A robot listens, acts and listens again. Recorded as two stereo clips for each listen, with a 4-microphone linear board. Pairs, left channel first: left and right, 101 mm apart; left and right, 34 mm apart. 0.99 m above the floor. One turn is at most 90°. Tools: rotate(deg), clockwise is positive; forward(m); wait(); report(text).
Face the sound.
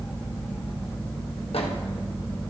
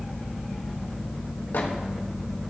wait()
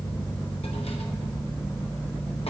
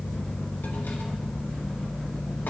wait()
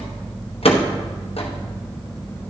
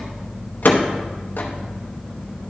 rotate(-65)
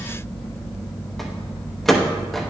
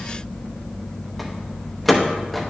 report("Found it: a microwave, straight ahead.")